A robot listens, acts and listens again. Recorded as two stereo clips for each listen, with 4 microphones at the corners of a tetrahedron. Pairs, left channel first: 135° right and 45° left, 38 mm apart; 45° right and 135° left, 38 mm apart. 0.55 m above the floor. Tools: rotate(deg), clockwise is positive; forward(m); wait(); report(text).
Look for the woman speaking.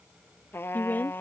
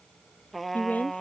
rotate(95)
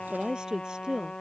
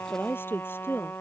rotate(25)
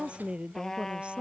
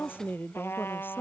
rotate(15)
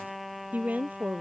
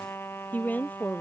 report("Facing the woman speaking.")